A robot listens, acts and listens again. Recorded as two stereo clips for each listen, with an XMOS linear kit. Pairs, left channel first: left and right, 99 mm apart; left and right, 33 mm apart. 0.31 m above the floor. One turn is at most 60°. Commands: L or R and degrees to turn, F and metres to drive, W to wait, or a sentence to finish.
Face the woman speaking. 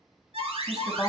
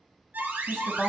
L25
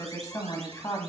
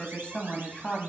L30
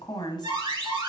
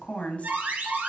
L60
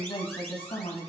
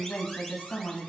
L60
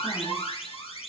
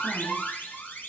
W
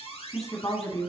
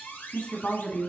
L35
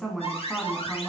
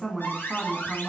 Found it: a woman speaking, straight ahead, 2 to 4 m away.